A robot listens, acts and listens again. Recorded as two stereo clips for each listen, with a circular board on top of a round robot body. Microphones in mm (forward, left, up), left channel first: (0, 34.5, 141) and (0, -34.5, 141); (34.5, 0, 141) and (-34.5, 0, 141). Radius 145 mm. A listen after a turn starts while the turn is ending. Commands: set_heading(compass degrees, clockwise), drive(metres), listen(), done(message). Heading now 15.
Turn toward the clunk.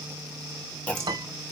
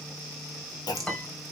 set_heading(355)
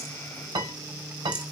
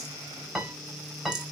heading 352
done("I heard a clunk from this way, but can't make it out now.")